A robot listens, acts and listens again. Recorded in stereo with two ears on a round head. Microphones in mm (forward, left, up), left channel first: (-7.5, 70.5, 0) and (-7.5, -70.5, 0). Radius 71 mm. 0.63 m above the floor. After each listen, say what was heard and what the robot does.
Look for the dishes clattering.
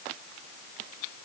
Keep listening.
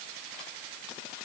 Keep listening.
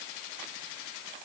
I can't make out dishes clattering to turn to.